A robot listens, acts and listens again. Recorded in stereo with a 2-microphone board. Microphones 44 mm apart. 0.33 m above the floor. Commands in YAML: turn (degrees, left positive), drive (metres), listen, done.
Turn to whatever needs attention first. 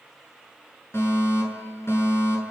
turn: 70
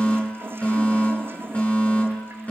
turn: 35
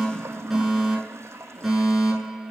done: "Found it: a fire alarm, straight ahead, over 4 m away."